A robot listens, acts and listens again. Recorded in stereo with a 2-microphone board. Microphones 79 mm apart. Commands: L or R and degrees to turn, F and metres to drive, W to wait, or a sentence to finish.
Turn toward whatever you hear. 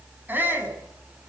R25
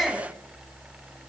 Found it: a shout, straight ahead, over 4 m away.